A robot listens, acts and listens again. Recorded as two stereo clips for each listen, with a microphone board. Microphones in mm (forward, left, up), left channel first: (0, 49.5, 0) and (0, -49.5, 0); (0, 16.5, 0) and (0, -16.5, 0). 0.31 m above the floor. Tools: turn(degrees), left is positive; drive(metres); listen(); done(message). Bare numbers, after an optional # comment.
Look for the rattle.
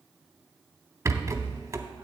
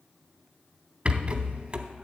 # The rattle: about 35° right or 145° right.
turn(-35)
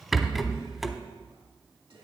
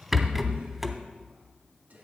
done("Found it: a rattle, straight ahead, under 1 m away.")